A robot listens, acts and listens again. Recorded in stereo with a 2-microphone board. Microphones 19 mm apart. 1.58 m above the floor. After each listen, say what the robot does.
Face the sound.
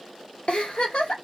Turn 70° left.
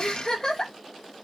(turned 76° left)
Turn 35° left.
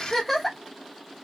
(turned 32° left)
Facing the giggle, under 1 m away.